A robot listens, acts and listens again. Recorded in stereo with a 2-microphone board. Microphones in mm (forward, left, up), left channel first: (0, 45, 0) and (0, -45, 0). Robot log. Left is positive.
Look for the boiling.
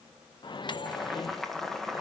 cmd yaw +30
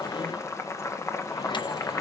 note: So it is at 150° left.
cmd yaw +150
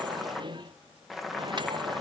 end: Facing the boiling, 1 to 2 m away.